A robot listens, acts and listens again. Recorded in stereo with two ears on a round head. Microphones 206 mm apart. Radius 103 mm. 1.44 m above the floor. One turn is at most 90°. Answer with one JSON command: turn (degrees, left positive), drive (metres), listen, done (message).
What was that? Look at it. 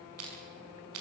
{"turn": -70}
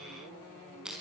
{"done": "Facing the crushing, over 4 m away."}